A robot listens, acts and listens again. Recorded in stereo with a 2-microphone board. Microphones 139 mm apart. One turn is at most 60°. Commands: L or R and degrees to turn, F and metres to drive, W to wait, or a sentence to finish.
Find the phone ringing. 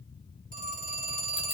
R60
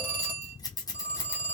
R10
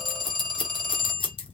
Found it: a phone ringing, straight ahead.